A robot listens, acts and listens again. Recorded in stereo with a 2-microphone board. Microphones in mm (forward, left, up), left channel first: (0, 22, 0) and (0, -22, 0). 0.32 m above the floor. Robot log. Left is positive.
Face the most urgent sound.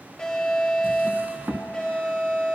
note: The alarm: about 15° left or 165° left.
cmd yaw +15
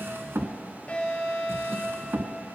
note: So it is at 150° left.
cmd yaw +150
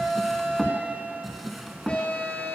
note: The alarm is now 35° left.
cmd yaw +35
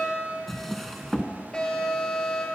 note: The alarm is now 30° left.
cmd yaw +30
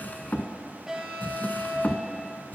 note: The alarm is now 10° right.
cmd yaw -10
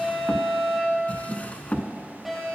end: Facing the alarm.